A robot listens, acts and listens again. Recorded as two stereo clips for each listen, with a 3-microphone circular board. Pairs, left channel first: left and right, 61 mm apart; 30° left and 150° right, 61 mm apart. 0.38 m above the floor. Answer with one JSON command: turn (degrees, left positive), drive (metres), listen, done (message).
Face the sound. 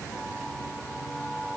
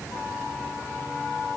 {"listen": true}
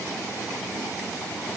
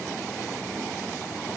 {"listen": true}
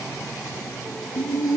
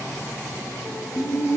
{"turn": 80}
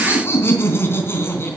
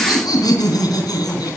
{"turn": 35}
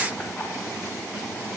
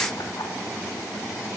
{"listen": true}
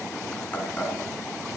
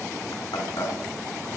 {"turn": 15}
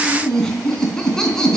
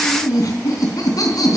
{"turn": 10}
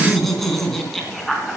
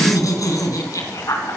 {"done": "Found it: laughter, straight ahead, 2 to 4 m away."}